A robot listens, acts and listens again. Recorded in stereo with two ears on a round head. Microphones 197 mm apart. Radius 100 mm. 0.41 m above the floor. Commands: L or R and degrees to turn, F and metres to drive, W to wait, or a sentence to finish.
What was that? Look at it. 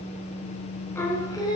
L20
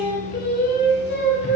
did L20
L125
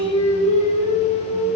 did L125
L20
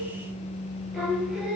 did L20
Found it: singing, straight ahead, 2 to 4 m away.